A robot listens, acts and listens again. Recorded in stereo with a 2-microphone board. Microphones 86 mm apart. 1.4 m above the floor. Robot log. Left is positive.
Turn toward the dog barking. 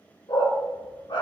note: The dog barking: about 70° left or 110° left.
cmd yaw +70
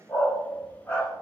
note: So it is at 20° left.
cmd yaw +20
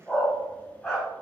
end: Found it: a dog barking, straight ahead.